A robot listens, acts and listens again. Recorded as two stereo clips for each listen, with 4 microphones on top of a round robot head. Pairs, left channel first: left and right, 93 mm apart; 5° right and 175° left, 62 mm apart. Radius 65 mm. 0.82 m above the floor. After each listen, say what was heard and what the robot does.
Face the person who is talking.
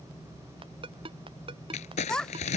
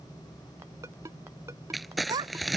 The child speaking: 175° left. Turn 175° left.
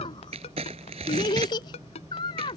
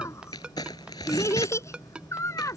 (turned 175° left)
The child speaking is now 35° left. Turn 35° left.
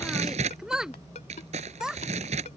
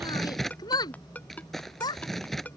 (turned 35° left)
Found it: a child speaking, straight ahead.